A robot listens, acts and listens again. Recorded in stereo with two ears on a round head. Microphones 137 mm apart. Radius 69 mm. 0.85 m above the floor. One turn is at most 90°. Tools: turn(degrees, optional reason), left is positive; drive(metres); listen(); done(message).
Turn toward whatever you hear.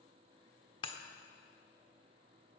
turn(degrees=35, reason="The breaking glass: about 35° left or 145° left.")
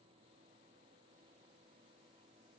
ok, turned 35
listen()
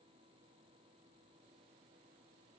done("I heard breaking glass, but can't make it out now. It was about straight ahead or 110° left.")